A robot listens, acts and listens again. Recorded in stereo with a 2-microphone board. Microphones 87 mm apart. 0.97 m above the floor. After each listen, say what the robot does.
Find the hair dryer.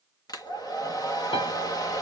Turn 45° left.
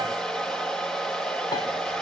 Facing the hair dryer.